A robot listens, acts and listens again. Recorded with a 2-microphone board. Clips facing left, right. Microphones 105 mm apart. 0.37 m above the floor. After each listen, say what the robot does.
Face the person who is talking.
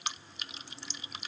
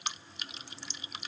Keep listening.
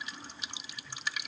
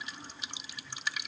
Keep listening.
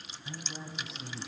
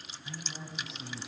Turn 30° left.
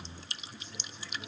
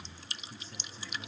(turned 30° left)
Turn 40° right.
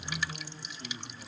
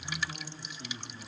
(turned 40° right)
Turn 20° right.
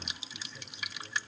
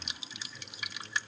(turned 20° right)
Keep listening.
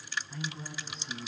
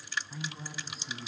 Facing the man speaking.